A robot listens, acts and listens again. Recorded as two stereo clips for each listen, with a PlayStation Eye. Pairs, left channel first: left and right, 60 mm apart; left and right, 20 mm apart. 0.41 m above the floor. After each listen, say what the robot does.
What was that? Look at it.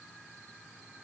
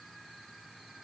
Keep listening.
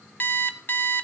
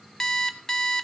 Turn 30° left.
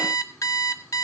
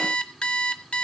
Turn 120° left.
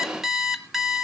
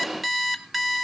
Found it: an alarm clock, straight ahead.